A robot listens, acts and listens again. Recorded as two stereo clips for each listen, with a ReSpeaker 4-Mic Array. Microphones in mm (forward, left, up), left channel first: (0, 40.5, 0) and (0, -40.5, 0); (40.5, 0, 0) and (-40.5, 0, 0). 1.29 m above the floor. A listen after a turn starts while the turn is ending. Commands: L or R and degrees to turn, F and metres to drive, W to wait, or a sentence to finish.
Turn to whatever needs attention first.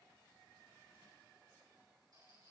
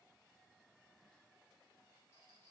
W
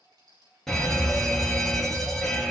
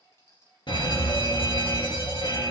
Facing the fire alarm.